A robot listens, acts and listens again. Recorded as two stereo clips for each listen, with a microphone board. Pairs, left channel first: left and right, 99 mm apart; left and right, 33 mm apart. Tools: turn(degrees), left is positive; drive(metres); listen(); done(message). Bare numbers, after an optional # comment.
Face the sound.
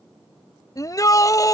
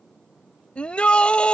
# The shout: about 35° left or 145° left.
turn(35)
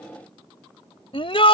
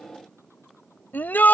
# So it is at 110° left.
turn(110)
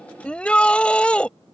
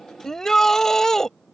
# The shout is now 10° left.
turn(10)
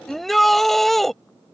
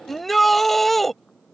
done("Facing the shout.")